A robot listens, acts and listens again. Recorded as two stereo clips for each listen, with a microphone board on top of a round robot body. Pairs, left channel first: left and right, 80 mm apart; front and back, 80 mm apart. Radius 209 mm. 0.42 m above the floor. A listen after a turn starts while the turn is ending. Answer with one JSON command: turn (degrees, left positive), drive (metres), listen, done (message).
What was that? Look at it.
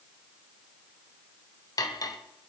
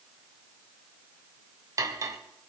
{"turn": 130}
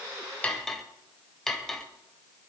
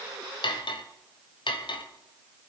{"done": "Facing the cutlery clinking."}